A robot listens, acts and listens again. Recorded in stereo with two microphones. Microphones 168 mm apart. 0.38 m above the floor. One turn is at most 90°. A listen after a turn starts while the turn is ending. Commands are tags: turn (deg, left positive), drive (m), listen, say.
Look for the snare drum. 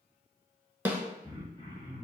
<turn deg="-30"/>
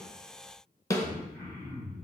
<turn deg="20"/>
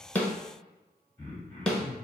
<say>Found it: a snare drum, straight ahead.</say>